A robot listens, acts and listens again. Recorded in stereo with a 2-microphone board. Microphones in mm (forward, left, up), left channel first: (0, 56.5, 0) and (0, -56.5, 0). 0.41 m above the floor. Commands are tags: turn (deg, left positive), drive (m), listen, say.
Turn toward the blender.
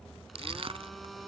<turn deg="30"/>
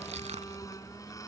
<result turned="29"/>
<turn deg="150"/>
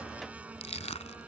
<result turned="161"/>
<turn deg="-15"/>
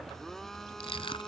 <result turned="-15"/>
<say>Facing the blender.</say>